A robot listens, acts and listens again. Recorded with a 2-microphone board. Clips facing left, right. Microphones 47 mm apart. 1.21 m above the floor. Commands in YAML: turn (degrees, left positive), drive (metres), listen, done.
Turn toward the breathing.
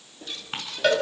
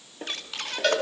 turn: -60
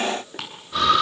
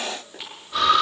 done: "Found it: breathing, straight ahead."